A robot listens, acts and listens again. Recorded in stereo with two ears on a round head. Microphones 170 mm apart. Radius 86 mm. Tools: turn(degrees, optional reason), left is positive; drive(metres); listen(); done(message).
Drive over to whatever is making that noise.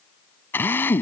turn(degrees=30)
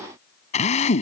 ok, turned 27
turn(degrees=140, reason="So it is at 140° left.")
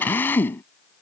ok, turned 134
turn(degrees=10, reason="The drill is now 10° left.")
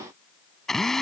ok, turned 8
drive(metres=1.0)
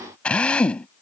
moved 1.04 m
drive(metres=1.0)
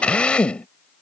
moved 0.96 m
drive(metres=1.0)
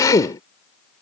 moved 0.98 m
turn(degrees=20, reason="The drill is now 20° left.")
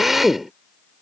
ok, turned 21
drive(metres=1.0)
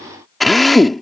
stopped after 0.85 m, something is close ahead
done("I am next to the drill.")